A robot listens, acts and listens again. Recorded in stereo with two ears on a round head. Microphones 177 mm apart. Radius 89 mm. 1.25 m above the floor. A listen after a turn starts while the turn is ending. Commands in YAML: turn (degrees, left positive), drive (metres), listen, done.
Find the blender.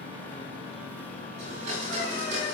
turn: -40
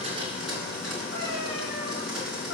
done: "Facing the blender."